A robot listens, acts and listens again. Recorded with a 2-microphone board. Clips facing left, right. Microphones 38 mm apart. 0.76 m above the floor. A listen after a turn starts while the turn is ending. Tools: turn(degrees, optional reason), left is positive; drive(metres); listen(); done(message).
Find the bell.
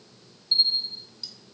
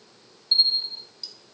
turn(degrees=-30, reason="The bell: about 30° right or 150° right.")
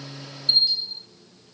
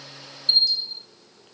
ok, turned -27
done("Found it: a bell, straight ahead.")